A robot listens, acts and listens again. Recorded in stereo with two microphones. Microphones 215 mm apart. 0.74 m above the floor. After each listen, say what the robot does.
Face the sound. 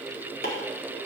Turn 45° left.
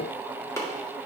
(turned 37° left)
Turn 15° left.
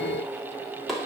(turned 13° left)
Found it: chopping, straight ahead.